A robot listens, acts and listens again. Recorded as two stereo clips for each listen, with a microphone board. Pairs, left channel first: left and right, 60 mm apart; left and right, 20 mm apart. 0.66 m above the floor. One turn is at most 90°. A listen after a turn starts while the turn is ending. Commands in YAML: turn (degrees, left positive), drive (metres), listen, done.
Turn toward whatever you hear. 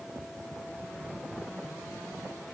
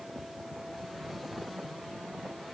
listen: true
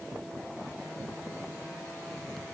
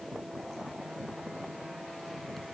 listen: true
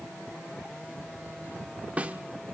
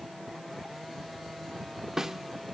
turn: -25
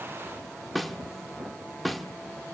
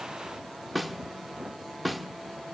done: "Facing the snare drum, 1 to 2 m away."